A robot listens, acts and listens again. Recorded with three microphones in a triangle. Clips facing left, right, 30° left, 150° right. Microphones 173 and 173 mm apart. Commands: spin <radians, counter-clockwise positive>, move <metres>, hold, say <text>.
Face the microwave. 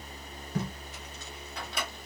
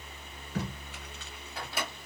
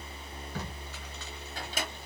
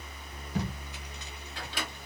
say Facing the microwave, 1 to 2 m away.